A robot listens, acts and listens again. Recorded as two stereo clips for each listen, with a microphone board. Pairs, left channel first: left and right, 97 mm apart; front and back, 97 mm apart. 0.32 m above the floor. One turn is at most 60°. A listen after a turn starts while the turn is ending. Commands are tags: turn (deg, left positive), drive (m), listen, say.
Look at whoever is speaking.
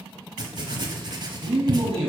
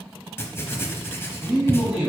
<turn deg="-60"/>
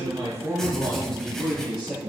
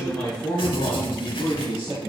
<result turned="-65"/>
<say>Facing the man speaking, 2 to 4 m away.</say>